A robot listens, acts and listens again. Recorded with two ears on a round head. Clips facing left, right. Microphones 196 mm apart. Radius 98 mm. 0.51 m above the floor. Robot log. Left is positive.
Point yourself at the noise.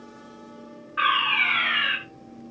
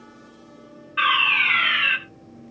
note: The fire alarm: about 40° right or 140° right.
cmd yaw -40
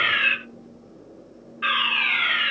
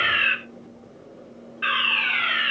note: So it is at 10° right.
cmd yaw -10
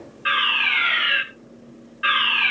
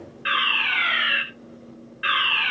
end: Facing the fire alarm, 2 to 4 m away.